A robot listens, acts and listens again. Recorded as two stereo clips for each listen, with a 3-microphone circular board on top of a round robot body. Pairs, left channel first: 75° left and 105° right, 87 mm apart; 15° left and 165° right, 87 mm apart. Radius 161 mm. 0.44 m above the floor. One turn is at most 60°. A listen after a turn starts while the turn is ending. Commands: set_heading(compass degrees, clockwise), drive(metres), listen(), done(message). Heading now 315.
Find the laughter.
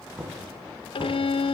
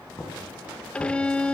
listen()
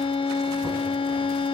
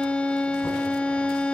listen()
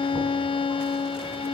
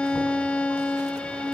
done("I can't make out laughter to turn to.")